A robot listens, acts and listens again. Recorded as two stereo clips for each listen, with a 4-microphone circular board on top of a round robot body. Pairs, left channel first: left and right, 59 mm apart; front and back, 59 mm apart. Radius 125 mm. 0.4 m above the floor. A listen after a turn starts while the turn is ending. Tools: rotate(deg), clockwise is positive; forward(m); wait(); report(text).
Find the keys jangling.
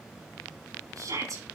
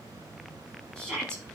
wait()
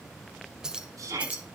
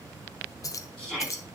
rotate(25)
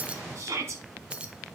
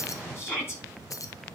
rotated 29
rotate(20)
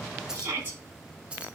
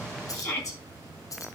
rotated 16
rotate(20)
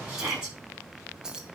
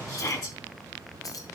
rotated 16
rotate(15)
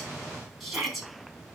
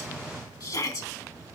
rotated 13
wait()
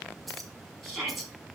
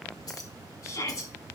report("Found it: keys jangling, straight ahead.")